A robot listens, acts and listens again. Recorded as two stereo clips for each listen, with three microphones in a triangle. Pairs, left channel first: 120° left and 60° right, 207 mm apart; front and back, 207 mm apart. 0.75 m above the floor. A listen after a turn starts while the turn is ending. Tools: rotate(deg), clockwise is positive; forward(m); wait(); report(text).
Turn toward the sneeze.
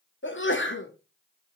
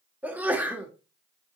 rotate(-100)
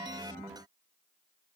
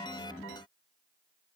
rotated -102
report("Facing where the sneeze came from. I can't hear it now.")